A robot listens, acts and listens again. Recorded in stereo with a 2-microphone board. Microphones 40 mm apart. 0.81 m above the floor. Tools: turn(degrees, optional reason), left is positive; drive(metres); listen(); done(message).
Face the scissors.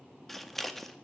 turn(degrees=30)
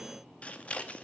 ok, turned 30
turn(degrees=145, reason="So it is at 145° left.")
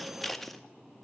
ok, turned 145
done("Facing the scissors, under 1 m away.")